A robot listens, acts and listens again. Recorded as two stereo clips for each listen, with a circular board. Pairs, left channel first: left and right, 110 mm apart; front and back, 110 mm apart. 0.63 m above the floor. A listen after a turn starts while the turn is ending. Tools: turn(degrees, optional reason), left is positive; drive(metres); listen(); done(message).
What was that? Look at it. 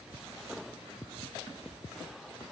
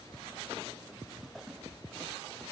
listen()
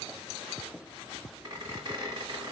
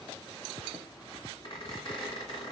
turn(degrees=-40, reason="The squeak: 40° right.")
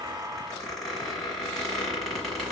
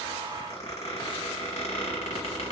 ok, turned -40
done("Facing the squeak.")